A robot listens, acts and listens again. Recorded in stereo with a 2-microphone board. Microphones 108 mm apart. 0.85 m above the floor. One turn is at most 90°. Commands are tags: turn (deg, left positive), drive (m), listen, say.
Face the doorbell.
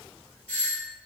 <turn deg="15"/>
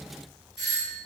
<say>Facing the doorbell, 1 to 2 m away.</say>